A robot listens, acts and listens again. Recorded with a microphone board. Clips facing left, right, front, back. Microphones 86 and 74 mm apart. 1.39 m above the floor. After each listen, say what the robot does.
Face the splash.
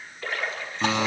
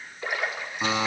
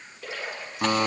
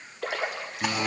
Turn 165° right.
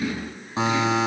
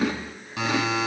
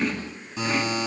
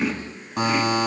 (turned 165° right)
Facing where the splash came from. I can't hear it now.